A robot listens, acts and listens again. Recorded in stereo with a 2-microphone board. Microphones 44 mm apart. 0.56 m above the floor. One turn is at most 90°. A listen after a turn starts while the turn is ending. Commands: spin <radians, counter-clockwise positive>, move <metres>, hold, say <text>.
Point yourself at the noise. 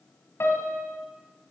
spin 1.13
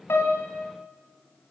spin 0.79
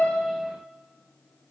hold
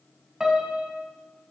spin -0.17
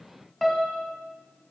say Facing the piano, 1 to 2 m away.